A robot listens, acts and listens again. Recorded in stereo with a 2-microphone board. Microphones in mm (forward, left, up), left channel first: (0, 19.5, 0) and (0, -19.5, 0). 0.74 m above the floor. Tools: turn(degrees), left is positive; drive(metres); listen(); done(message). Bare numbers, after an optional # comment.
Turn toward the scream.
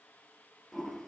listen()
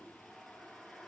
listen()
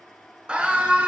# The scream: about 25° right or 155° right.
turn(-25)
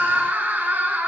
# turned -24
# So it is at 130° right.
turn(-130)
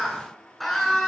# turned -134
done("Facing the scream.")